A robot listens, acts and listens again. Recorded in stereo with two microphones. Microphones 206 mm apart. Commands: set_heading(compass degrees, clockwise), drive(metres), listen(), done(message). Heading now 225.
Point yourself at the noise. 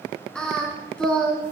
set_heading(195)
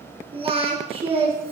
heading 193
set_heading(218)
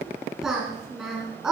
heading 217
done("Found it: singing, straight ahead.")